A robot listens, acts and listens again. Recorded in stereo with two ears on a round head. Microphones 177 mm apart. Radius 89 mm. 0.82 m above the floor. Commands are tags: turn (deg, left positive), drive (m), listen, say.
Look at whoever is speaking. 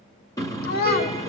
<turn deg="50"/>
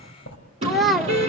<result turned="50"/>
<say>Facing the child speaking.</say>